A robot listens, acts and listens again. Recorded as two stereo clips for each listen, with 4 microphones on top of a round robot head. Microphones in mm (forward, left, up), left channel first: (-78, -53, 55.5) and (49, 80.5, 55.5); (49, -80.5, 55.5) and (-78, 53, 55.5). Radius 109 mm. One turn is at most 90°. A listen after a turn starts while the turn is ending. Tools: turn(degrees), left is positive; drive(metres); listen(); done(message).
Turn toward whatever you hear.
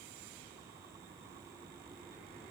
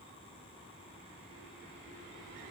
listen()
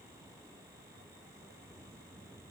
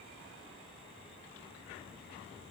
listen()
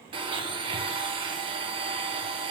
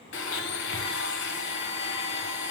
turn(degrees=-20)
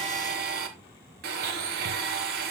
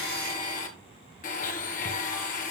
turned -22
done("Found it: a blender, straight ahead, 1 to 2 m away.")